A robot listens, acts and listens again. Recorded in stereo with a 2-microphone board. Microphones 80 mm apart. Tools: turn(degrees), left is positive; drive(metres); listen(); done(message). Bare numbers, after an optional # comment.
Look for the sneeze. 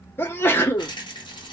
# The sneeze: about 25° left or 155° left.
turn(25)
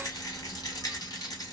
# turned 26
listen()
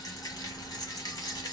done("I heard a sneeze, but can't make it out now. It was about straight ahead or 125° left.")